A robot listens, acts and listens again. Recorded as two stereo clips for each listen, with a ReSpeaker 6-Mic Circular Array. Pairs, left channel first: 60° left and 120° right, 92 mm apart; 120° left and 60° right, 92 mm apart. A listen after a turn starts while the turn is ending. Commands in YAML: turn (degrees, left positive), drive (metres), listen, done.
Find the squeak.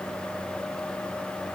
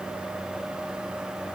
listen: true
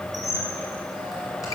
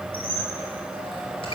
turn: 110
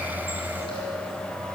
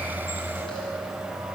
listen: true
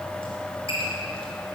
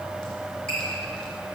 turn: 40
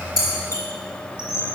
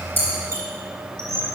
done: "Found it: a squeak, straight ahead, 2 to 4 m away."